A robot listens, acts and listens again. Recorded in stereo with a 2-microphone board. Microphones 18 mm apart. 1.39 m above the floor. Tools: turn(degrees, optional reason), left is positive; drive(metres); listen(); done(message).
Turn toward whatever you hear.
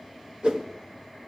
turn(degrees=-55, reason="The whoosh: about 55° right or 125° right.")
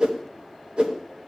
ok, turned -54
turn(degrees=-65, reason="So it is at 65° right.")
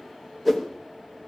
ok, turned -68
done("Facing the whoosh.")